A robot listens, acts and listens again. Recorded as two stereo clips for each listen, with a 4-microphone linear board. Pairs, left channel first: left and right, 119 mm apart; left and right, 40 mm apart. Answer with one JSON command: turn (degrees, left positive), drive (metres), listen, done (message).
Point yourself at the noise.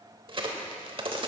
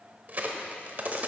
{"turn": -45}
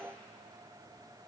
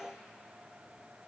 {"listen": true}
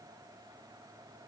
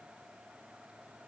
{"done": "I heard a crack, but can't make it out now. It was about straight ahead or 90° right."}